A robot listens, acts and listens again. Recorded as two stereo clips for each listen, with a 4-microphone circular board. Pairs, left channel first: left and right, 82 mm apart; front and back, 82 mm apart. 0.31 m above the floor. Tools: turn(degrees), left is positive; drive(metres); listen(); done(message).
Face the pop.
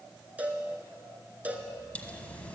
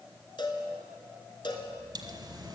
turn(degrees=160)
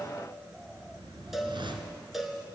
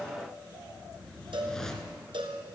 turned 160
done("I heard a pop from this way, but can't make it out now.")